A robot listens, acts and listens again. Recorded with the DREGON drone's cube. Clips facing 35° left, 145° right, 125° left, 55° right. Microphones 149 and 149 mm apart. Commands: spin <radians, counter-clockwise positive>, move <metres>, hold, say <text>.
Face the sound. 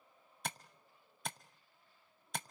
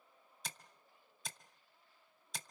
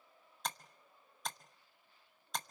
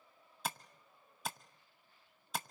spin 0.44
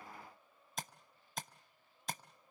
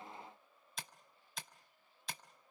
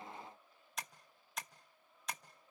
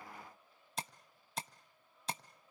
say Found it: tapping, straight ahead, under 1 m away.